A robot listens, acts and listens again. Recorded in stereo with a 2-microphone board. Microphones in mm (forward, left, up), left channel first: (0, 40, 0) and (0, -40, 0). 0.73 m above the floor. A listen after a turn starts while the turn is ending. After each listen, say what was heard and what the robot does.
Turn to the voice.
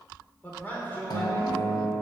The man speaking: about 25° left or 155° left. Turn 25° left.
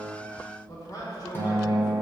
So it is at 130° left. Turn 130° left.
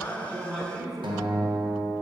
Found it: a man speaking, straight ahead.